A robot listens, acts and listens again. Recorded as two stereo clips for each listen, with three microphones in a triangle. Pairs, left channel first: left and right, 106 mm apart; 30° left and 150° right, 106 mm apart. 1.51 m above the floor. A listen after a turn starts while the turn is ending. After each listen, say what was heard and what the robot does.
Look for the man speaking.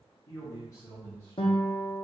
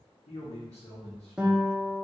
The man speaking: 30° left. Turn 30° left.
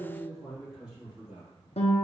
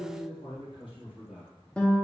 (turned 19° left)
The man speaking is now 15° right. Turn 15° right.
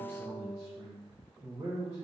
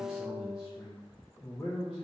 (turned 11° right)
The man speaking is now 50° right. Turn 50° right.
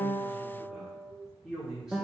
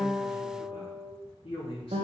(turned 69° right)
Facing the man speaking, 1 to 2 m away.